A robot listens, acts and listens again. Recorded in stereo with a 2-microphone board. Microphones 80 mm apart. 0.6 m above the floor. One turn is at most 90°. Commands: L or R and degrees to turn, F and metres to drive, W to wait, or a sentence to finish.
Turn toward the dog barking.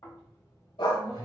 L90
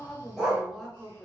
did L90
R10
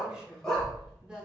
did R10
Found it: a dog barking, straight ahead.